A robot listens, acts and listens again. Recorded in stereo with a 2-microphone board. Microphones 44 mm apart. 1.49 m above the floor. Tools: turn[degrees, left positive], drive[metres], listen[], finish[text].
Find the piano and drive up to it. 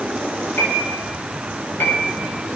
Thought: The piano: about 60° left or 120° left.
Action: turn[60]
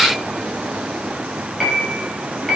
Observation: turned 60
Action: drive[1.0]
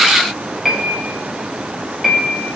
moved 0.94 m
Action: drive[1.0]
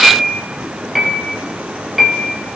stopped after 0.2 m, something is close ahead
Action: finish[Arrived at the piano, straight ahead.]